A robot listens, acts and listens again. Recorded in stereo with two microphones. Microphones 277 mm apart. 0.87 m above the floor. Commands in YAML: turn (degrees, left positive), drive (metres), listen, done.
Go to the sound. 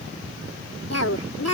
turn: 65
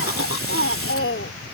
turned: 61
turn: 50
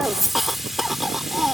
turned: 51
drive: 1.0
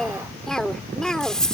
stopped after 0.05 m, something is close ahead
done: "Something is in my way. I am facing the cough but have not reached it."